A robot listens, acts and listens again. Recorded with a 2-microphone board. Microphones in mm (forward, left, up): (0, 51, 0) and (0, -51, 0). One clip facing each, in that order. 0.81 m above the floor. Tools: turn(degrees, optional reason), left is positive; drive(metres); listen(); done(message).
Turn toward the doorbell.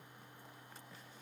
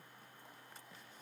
listen()
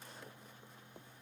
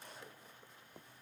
listen()
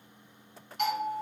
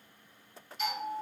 turn(degrees=60, reason="The doorbell: about 60° left or 120° left.")
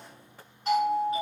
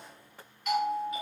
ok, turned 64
turn(degrees=40, reason="So it is at 40° left.")
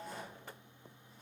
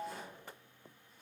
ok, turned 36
listen()
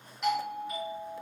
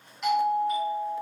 done("Facing the doorbell, 1 to 2 m away.")